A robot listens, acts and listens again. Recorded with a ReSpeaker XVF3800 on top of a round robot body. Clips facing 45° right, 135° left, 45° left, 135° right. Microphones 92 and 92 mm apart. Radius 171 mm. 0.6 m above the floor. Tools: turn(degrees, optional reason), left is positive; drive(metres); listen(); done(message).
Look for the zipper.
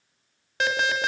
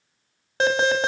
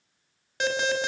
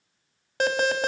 listen()
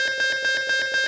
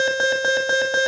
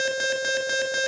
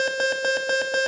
listen()
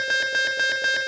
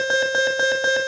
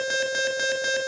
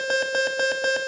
done("I can't make out a zipper to turn to.")